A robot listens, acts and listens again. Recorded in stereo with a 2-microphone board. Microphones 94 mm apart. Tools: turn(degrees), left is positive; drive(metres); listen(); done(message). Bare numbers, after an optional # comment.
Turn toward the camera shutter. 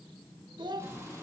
listen()
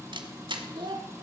# The camera shutter: about 60° right or 120° right.
turn(-60)
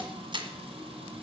# So it is at 60° right.
turn(-60)
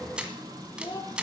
# The camera shutter is now 10° right.
turn(-10)
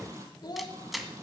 done("Found it: a camera shutter, straight ahead.")